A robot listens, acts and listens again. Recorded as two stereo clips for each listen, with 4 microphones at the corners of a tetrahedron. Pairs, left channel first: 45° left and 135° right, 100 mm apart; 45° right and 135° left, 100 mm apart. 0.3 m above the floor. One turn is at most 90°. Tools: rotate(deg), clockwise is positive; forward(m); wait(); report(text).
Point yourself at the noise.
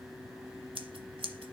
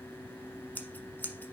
rotate(90)
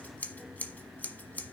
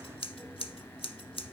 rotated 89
rotate(30)
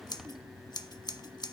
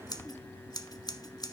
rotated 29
report("Facing the scissors.")